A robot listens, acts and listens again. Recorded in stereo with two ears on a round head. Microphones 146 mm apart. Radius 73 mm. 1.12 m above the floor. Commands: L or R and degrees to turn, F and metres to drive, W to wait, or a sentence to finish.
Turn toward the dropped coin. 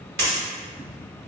R70
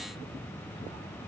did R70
W
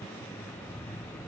I heard a dropped coin, but can't make it out now. It was about straight ahead or 40° right.